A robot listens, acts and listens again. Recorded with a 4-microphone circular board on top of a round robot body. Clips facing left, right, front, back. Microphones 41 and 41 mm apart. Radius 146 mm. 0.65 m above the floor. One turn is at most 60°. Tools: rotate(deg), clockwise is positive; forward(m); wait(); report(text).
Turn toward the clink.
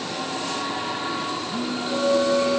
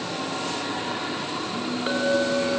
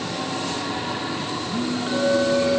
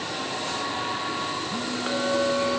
rotate(60)
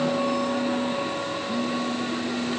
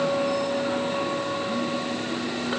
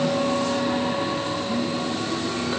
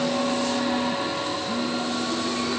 rotate(60)
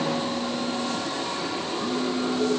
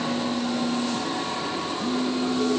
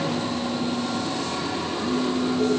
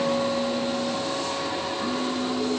rotate(30)
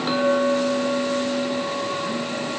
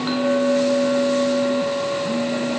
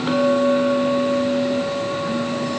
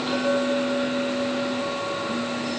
report("Facing the clink.")